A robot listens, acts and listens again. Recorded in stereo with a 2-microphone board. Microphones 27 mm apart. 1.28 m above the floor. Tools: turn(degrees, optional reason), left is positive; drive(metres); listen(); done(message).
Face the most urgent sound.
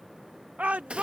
turn(degrees=-65, reason="The shout: about 65° right or 115° right.")
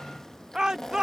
turn(degrees=-30, reason="So it is at 30° right.")
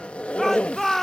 turn(degrees=10, reason="The shout is now 10° left.")
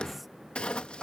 done("Found it: a shout, straight ahead.")